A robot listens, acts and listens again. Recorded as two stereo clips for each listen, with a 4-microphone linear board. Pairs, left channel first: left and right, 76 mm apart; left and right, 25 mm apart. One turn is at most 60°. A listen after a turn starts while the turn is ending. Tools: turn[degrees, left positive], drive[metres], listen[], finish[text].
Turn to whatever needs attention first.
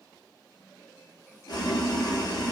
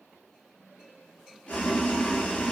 Action: listen[]
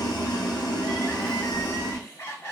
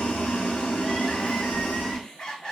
Thought: The crying: about 30° left or 150° left.
Action: turn[30]
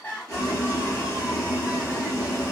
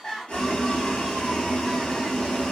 Action: listen[]
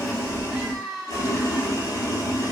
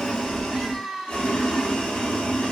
Action: finish[Found it: crying, straight ahead, 1 to 2 m away.]